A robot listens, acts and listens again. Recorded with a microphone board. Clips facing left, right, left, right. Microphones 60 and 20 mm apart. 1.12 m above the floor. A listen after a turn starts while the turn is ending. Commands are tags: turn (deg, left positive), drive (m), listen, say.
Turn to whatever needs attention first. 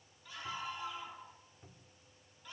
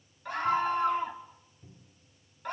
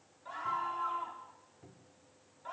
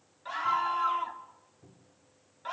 <turn deg="-55"/>
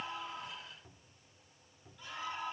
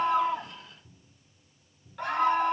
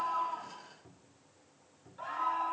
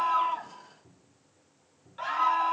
<turn deg="-65"/>
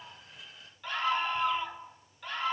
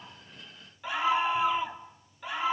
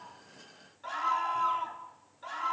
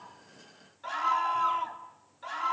<turn deg="-10"/>
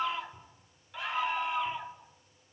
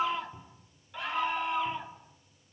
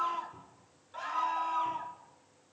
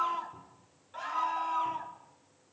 <say>Facing the scream.</say>